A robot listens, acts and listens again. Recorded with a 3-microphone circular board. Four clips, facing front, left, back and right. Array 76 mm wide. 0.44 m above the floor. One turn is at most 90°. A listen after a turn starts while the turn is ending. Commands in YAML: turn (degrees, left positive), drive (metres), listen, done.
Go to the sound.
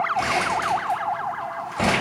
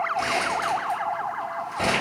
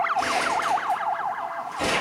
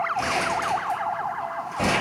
turn: -10
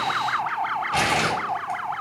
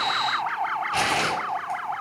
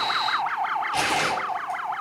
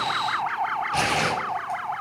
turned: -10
drive: 1.0
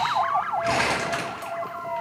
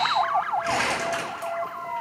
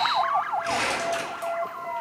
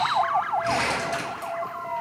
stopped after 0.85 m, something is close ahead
turn: 10
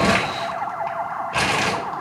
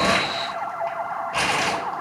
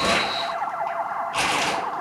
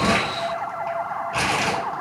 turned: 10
done: "I am next to the crumpling."